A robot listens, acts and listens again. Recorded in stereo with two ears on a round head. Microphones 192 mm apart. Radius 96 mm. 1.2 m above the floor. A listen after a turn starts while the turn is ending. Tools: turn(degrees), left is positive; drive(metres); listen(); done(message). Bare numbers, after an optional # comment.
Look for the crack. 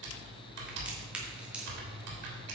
turn(-30)
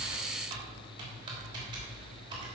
listen()
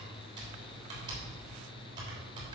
done("I heard a crack, but can't make it out now. It was about 25° left or 145° right.")